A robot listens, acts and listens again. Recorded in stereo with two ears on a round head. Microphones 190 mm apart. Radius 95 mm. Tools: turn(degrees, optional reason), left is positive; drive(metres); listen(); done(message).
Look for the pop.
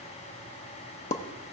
turn(degrees=35, reason="The pop: about 35° left or 145° left.")
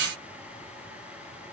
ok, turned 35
listen()
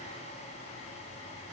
done("I heard a pop, but can't make it out now. It was about straight ahead or 110° left.")